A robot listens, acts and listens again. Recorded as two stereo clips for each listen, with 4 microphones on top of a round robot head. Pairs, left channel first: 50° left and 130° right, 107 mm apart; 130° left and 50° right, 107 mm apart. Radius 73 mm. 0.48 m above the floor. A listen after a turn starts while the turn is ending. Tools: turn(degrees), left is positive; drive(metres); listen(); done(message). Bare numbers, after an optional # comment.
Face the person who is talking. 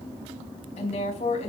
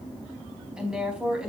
# The woman speaking: 35° left.
turn(35)
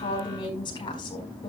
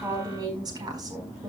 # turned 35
done("Found it: a woman speaking, straight ahead.")